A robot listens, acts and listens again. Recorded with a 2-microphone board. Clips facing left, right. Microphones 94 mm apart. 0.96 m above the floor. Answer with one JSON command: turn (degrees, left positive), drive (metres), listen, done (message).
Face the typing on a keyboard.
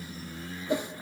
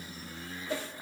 {"listen": true}
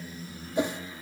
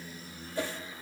{"listen": true}
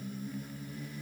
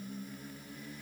{"done": "I can't make out typing on a keyboard, only a whoosh."}